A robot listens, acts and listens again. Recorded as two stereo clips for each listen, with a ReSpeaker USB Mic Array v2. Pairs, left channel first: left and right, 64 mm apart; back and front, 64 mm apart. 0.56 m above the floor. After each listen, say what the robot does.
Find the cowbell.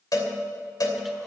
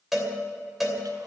Turn 85° left.
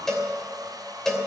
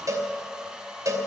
Turn 10° left.
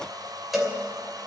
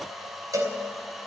Facing the cowbell, 2 to 4 m away.